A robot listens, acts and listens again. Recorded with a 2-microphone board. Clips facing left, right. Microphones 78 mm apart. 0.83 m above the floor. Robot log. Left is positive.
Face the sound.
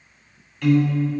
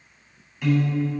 cmd yaw -30
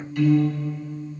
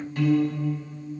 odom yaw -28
note: So it is at 145° right.
cmd yaw -145
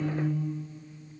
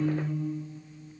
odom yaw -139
cmd idle
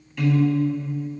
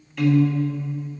end: Facing the piano.